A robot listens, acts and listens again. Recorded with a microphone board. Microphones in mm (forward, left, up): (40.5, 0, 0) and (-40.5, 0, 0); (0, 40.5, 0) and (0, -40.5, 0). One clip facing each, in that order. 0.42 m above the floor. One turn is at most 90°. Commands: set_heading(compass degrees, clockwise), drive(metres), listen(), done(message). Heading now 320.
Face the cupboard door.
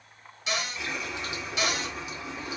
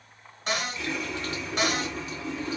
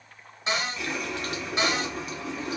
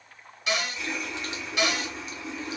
set_heading(230)
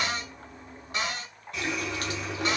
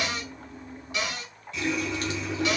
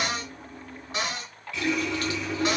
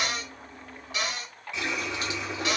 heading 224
set_heading(179)
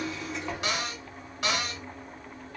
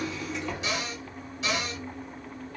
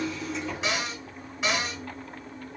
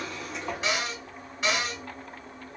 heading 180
done("Facing the cupboard door, 1 to 2 m away.")